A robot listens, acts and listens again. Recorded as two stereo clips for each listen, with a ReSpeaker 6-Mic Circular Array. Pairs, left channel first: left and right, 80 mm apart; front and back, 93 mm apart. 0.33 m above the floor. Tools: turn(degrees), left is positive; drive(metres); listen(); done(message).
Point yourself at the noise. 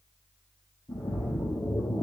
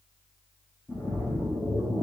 turn(degrees=60)
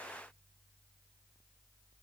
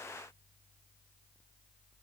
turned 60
done("Facing where the splash came from. I can't hear it now.")